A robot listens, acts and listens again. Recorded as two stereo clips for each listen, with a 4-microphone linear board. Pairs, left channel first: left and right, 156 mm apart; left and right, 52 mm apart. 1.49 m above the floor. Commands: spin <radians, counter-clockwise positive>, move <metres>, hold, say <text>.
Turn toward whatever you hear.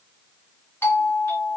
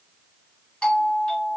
spin 0.52
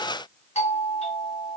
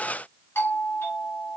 spin 2.36
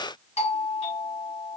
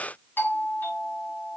spin 0.79
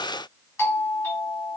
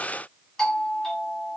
spin 0.26
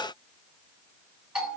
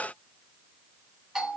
say Facing the doorbell.